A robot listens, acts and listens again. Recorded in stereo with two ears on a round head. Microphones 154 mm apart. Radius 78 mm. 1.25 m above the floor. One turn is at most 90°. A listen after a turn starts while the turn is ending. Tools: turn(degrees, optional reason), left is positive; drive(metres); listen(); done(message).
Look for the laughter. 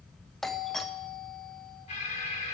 listen()
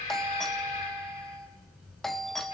listen()
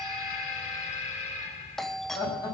turn(degrees=25, reason="The laughter: about 25° left or 155° left.")
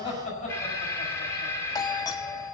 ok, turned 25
turn(degrees=90, reason="So it is at 135° left.")
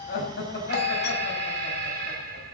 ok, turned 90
turn(degrees=60, reason="The laughter is now 60° left.")
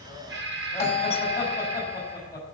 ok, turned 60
turn(degrees=20, reason="The laughter is now 20° left.")
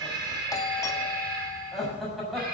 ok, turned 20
done("Found it: laughter, straight ahead.")